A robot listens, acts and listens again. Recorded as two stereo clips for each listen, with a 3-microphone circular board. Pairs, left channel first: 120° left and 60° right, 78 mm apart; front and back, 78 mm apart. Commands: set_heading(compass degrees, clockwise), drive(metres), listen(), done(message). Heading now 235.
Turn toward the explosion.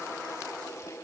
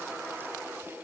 listen()
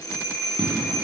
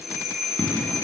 set_heading(300)
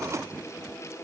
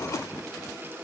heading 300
done("I heard an explosion from this way, but can't make it out now.")